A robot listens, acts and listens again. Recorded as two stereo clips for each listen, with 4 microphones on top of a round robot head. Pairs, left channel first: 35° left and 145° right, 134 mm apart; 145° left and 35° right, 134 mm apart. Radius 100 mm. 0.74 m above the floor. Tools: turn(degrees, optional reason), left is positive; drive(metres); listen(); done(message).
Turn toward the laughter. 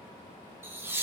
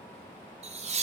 turn(degrees=-70, reason="The laughter: 70° right.")
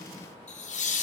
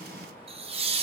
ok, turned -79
done("Found it: laughter, straight ahead, 1 to 2 m away.")